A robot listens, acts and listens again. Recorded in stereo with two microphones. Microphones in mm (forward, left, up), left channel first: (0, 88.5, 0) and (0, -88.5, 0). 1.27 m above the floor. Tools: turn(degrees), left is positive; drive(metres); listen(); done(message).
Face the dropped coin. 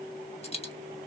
turn(degrees=35)
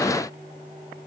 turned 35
listen()
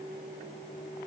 done("I heard a dropped coin, but can't make it out now. It was about straight ahead or 110° left.")